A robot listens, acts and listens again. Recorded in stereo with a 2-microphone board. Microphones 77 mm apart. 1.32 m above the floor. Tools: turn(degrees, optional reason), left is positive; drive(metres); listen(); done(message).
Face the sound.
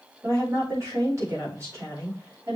turn(degrees=-40, reason="The woman speaking: about 40° right or 140° right.")
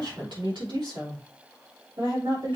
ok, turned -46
turn(degrees=-95, reason="So it is at 95° right.")
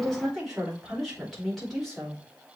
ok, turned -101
done("Found it: a woman speaking, straight ahead.")